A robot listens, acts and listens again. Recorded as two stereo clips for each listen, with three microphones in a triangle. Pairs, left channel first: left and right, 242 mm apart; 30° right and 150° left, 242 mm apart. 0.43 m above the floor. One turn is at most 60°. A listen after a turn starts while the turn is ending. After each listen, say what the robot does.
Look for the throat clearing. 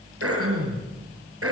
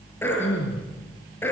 Turn 60° right.
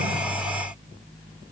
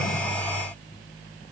Turn 50° right.
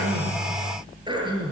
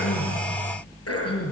Turn 20° right.
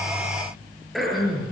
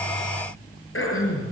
Facing the throat clearing.